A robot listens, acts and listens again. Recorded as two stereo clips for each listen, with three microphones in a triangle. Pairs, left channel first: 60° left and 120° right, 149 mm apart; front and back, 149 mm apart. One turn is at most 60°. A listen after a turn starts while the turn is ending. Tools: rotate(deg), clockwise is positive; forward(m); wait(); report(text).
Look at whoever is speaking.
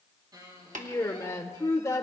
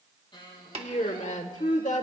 report("Found it: a woman speaking, straight ahead.")